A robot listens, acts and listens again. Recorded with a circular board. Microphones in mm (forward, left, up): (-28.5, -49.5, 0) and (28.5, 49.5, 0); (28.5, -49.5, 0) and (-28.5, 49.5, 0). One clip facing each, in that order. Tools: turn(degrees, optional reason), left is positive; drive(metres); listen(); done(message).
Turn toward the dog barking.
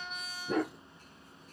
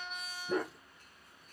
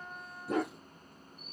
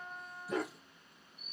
turn(degrees=-100, reason="The dog barking: 100° right.")
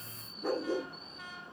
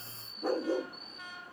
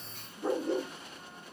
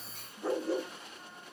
turn(degrees=10, reason="The dog barking is now 10° left.")
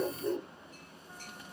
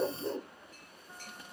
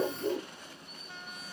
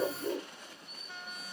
done("Found it: a dog barking, straight ahead.")